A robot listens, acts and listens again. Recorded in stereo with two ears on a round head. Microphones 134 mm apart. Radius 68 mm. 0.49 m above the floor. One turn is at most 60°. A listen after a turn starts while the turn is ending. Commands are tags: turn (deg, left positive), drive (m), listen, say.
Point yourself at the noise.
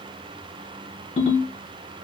<turn deg="40"/>
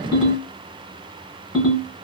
<say>Facing the ringtone.</say>